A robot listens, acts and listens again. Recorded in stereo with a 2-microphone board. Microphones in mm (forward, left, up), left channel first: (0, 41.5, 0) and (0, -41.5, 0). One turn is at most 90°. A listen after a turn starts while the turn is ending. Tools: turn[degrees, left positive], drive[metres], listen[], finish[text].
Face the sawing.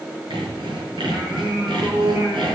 Action: turn[-90]
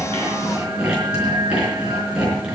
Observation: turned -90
Thought: So it is at 10° right.
Action: turn[-10]
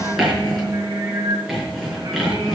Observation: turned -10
Action: finish[Facing the sawing.]